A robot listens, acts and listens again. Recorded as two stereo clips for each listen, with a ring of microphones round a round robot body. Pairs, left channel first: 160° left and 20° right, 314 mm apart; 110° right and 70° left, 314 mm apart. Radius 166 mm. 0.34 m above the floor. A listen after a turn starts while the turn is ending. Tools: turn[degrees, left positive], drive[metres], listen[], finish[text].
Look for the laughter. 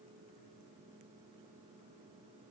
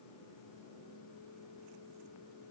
Action: listen[]
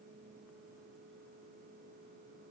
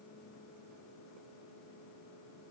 Action: listen[]
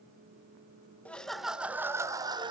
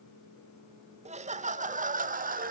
Thought: The laughter: 35° left.
Action: turn[35]
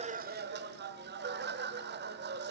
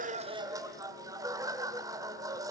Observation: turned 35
Action: finish[Found it: laughter, straight ahead.]